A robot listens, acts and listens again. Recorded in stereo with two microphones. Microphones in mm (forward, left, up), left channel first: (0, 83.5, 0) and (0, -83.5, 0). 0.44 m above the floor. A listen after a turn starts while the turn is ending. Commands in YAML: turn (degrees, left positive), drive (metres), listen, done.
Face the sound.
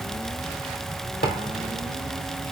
turn: 70
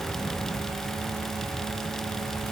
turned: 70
listen: true
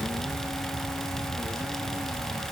done: "I heard a thud, but can't make it out now. It was about straight ahead or 40° left."